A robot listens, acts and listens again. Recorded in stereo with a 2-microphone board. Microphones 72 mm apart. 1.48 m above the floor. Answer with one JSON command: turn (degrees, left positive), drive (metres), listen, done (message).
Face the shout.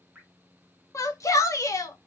{"turn": 45}
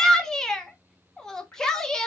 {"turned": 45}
{"turn": 10}
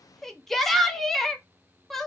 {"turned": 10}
{"done": "Found it: a shout, straight ahead, 1 to 2 m away."}